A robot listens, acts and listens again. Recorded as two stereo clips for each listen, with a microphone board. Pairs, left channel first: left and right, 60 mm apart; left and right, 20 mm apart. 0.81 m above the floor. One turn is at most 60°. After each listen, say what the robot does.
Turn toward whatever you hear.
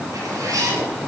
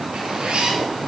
Turn 60° right.
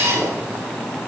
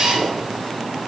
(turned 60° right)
Turn 45° right.
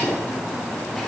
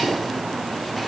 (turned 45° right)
Keep listening.
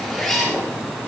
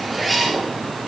Facing the zipper, over 4 m away.